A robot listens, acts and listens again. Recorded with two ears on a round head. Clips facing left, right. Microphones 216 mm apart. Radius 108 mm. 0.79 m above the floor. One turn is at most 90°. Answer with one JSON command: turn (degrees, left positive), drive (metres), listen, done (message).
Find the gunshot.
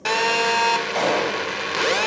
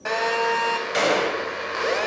{"turn": -20}
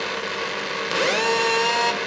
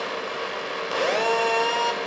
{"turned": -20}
{"listen": true}
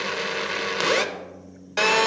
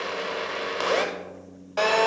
{"done": "I heard a gunshot, but can't make it out now. It was about straight ahead or 140° right."}